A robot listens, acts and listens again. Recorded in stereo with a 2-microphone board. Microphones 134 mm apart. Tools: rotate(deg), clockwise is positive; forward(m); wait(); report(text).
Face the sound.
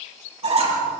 rotate(50)
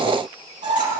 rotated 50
rotate(80)
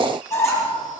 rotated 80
rotate(-20)
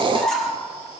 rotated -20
report("Facing the squeak, over 4 m away.")